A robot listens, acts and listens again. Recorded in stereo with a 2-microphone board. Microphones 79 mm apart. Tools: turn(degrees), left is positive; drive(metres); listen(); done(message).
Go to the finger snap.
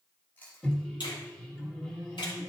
turn(degrees=75)
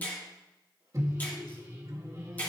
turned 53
turn(degrees=25)
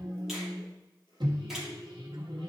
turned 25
listen()
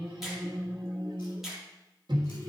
drive(metres=1.0)
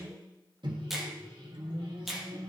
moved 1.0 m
drive(metres=1.0)
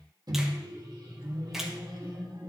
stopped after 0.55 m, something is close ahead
done("Arrived at the finger snap, straight ahead.")